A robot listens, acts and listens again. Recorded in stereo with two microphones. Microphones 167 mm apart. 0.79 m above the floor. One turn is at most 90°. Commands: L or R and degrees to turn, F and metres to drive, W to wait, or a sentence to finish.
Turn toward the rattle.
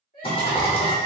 L35
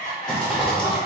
Facing the rattle, under 1 m away.